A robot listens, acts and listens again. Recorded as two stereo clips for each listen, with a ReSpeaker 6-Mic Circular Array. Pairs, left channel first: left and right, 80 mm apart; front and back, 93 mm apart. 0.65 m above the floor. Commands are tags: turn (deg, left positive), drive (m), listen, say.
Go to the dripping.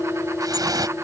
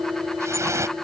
<turn deg="-125"/>
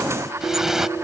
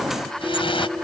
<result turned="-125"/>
<drive m="1.0"/>
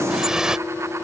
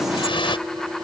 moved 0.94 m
<turn deg="-10"/>
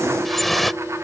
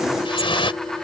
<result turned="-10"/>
<drive m="1.0"/>
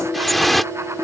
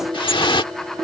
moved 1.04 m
<drive m="1.0"/>
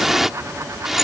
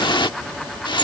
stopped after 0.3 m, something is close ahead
<say>Arrived at the dripping, straight ahead.</say>